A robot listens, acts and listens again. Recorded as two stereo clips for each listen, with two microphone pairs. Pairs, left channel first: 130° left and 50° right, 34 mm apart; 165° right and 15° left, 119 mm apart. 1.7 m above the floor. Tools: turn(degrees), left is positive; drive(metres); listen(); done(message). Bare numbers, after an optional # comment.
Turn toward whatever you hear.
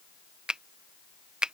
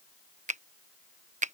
# The finger snap: 15° left.
turn(15)
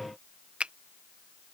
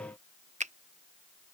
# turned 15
done("Facing the finger snap.")